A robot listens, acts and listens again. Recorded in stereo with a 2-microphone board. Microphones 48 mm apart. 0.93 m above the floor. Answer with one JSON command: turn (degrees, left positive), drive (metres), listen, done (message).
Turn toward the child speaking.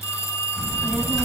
{"turn": 30}
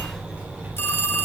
{"turn": -40}
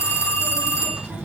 {"turn": -20}
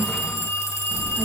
{"done": "Facing the child speaking, over 4 m away."}